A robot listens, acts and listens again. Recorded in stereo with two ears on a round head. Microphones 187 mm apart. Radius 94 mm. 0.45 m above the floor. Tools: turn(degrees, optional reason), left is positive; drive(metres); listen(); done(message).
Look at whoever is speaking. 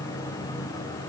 listen()
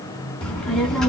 turn(degrees=30)
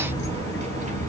turn(degrees=-35, reason="So it is at 35° right.")
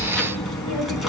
done("Facing the child speaking, 2 to 4 m away.")